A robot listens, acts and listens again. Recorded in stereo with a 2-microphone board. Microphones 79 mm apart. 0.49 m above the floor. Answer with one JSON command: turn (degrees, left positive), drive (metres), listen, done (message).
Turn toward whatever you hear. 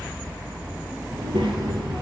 {"turn": -90}
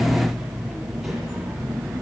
{"done": "Facing the child speaking."}